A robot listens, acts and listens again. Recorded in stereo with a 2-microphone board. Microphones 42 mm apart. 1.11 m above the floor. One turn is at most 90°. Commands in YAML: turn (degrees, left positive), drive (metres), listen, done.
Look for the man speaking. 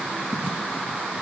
listen: true
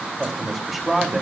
turn: 30
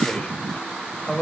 turn: 90
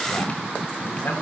turn: 65
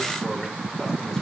turn: 10
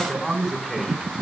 done: "Found it: a man speaking, straight ahead, over 4 m away."